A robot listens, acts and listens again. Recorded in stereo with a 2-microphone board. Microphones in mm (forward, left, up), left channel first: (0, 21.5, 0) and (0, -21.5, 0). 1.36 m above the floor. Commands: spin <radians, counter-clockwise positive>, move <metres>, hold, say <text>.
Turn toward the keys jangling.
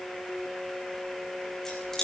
spin 0.52
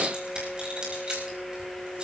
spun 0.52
spin -0.44
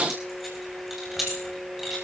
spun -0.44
say Found it: keys jangling, straight ahead, over 4 m away.